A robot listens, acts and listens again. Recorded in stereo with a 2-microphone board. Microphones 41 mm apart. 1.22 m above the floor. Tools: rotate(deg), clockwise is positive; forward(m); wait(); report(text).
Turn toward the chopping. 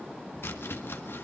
rotate(-65)
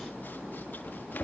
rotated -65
rotate(-50)
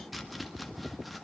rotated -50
report("Found it: chopping, straight ahead.")